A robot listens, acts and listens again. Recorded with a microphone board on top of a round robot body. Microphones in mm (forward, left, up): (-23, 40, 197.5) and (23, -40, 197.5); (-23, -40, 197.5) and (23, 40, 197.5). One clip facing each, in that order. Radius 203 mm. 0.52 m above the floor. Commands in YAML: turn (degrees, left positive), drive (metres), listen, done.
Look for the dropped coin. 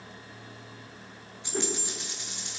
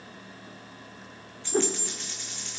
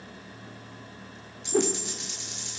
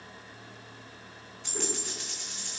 turn: 50
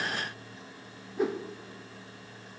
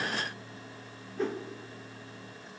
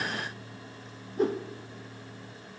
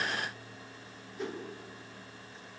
done: "I heard a dropped coin from this way, but can't make it out now."